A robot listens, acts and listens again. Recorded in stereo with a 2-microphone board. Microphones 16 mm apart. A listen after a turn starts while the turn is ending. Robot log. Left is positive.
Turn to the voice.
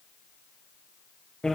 cmd idle
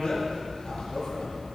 cmd idle
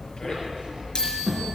note: The child speaking: about 70° right or 110° right.
cmd yaw -70
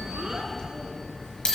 cmd idle
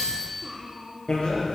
note: So it is at 40° right.
cmd yaw -40
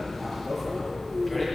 end: Facing the child speaking, 2 to 4 m away.